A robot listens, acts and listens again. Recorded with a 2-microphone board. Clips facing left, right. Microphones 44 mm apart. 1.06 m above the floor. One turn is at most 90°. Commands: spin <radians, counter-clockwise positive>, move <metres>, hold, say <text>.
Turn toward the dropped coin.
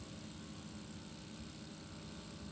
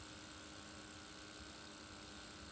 hold
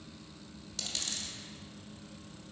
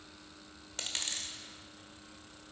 spin -0.70
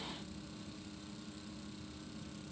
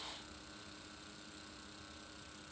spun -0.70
hold
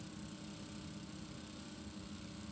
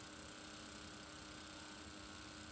say I heard a dropped coin, but can't make it out now. It was about straight ahead or 100° right.